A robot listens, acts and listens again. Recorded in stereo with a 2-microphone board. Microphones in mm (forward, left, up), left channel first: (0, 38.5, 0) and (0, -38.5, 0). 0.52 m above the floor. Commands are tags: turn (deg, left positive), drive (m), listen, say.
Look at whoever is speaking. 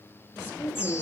<turn deg="30"/>
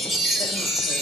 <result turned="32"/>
<listen/>
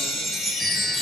<listen/>
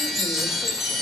<say>I heard a woman speaking, but can't make it out now. It was about 5° right or 120° left.</say>